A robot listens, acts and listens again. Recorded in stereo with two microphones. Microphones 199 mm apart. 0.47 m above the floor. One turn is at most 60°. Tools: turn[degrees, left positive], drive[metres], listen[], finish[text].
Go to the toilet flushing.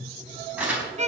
Action: listen[]
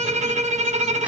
Action: listen[]
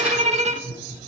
Action: finish[I can't make out a toilet flushing, only a violin and crumpling.]